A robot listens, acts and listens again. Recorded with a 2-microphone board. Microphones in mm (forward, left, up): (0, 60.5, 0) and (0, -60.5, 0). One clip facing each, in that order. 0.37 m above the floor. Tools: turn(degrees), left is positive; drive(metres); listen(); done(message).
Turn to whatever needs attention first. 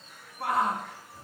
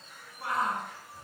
turn(degrees=65)
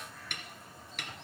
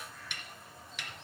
listen()
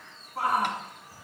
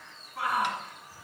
turn(degrees=40)
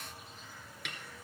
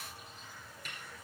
listen()
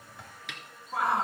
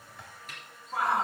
done("Found it: a shout, straight ahead, over 4 m away.")